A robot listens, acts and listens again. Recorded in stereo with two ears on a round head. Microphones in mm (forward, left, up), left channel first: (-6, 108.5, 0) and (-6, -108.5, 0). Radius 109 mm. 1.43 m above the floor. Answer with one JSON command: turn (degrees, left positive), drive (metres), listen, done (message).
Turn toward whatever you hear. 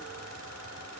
{"listen": true}
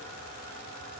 {"listen": true}
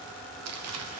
{"turn": -70}
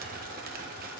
{"turn": -40}
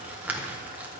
{"done": "Facing the crumpling."}